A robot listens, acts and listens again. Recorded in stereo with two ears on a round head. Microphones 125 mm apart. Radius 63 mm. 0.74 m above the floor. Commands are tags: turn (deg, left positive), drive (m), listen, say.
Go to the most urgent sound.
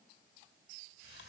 <listen/>
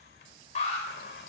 <turn deg="55"/>
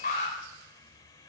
<turn deg="70"/>
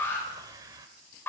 <turn deg="15"/>
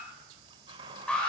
<turn deg="10"/>
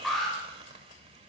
<drive m="1.0"/>
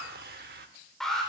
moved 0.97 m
<drive m="1.0"/>
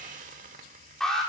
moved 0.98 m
<drive m="1.0"/>
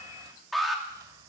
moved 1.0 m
<drive m="1.0"/>
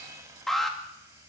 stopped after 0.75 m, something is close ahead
<say>I am next to the alarm.</say>